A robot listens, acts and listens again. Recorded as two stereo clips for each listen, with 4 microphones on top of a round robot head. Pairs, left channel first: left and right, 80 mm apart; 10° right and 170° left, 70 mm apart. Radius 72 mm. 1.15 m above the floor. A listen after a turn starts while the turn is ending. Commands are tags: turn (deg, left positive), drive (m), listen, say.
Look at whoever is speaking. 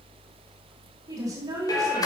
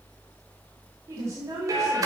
<turn deg="-135"/>
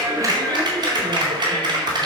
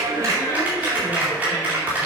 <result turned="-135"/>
<listen/>
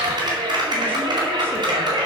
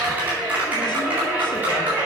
<listen/>
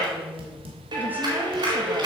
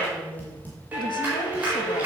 <turn deg="-20"/>
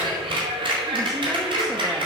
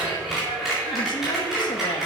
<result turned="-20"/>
<listen/>
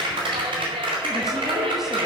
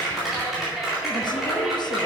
<listen/>
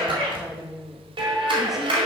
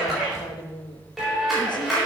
<say>Found it: a woman speaking, straight ahead.</say>